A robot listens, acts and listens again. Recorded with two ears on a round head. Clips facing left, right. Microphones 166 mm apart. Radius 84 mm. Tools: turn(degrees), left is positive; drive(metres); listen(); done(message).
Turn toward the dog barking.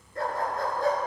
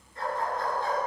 turn(degrees=40)
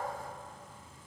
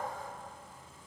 listen()
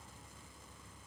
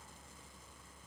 listen()
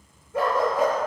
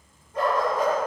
turn(degrees=120)
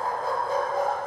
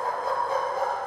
turn(degrees=30)
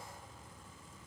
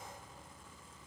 listen()
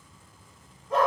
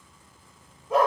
turn(degrees=-10)
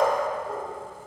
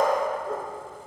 done("Facing the dog barking.")